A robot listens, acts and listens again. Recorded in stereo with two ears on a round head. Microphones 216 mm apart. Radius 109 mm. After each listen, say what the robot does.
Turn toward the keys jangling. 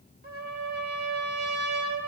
Keep listening.
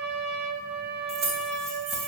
Turn 55° right.
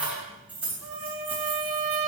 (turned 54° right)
Facing the keys jangling, 2 to 4 m away.